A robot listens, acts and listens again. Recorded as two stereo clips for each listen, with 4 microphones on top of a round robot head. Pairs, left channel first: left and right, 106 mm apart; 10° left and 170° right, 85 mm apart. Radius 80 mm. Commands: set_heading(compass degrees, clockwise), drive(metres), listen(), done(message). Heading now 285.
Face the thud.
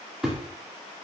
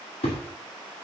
done("Found it: a thud, straight ahead, 2 to 4 m away.")